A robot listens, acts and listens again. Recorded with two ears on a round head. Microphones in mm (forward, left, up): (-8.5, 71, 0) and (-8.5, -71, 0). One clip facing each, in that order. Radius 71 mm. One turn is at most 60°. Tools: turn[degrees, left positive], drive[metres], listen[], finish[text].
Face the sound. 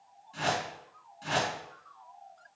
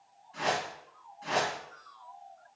Thought: The whoosh: about 45° left or 135° left.
Action: turn[45]
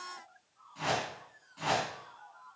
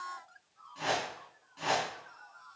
Action: finish[Facing the whoosh, 2 to 4 m away.]